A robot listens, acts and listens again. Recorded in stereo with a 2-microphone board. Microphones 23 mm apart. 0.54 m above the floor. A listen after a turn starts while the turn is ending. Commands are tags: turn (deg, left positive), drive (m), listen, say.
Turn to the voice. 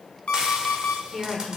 <turn deg="15"/>
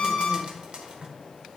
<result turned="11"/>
<listen/>
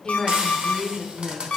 <turn deg="155"/>
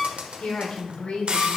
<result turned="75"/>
<turn deg="75"/>
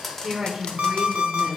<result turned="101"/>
<turn deg="-30"/>
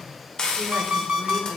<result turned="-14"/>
<turn deg="-15"/>
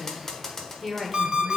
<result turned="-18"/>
<say>Found it: a woman speaking, straight ahead.</say>